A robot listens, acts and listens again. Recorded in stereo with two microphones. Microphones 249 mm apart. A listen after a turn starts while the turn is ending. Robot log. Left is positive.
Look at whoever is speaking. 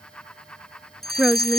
cmd yaw -30
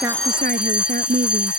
note: So it is at 145° right.
cmd yaw -145
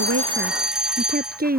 note: The woman speaking is now 35° right.
cmd yaw -35
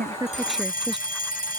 cmd idle
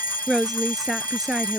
end: Facing the woman speaking.